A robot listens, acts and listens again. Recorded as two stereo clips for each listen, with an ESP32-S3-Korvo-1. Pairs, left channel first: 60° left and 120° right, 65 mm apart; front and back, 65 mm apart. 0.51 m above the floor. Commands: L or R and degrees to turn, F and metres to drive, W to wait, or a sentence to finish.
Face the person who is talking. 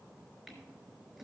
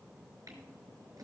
W
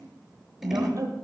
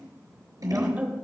R120
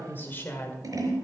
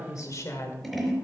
L15
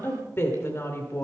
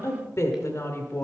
L30
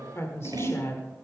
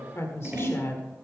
L40
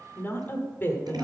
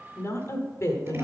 L20
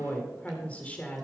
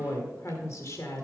Facing the woman speaking.